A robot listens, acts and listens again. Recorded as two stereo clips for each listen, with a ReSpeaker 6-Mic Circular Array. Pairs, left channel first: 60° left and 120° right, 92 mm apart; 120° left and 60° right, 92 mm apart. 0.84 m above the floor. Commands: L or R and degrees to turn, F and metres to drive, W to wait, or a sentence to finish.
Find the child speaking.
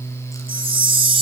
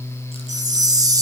W
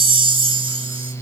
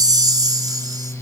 W
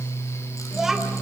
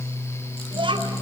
R35
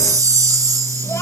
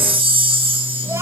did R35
W
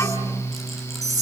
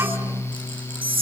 W
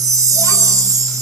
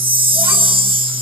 I heard a child speaking from this way, but can't make it out now.